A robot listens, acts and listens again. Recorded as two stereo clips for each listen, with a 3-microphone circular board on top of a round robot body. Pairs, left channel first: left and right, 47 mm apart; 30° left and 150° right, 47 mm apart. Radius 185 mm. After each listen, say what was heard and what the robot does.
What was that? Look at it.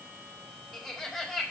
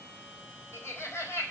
Found it: laughter, straight ahead.